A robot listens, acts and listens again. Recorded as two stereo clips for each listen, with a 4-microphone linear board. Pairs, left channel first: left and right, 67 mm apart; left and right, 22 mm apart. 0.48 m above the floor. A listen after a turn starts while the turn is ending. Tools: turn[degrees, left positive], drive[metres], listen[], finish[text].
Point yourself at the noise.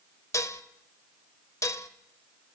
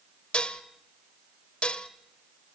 Thought: The dishes clattering: about 50° left or 130° left.
Action: turn[50]
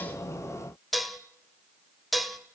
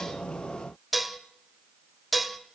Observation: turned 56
Action: finish[Found it: dishes clattering, straight ahead, 1 to 2 m away.]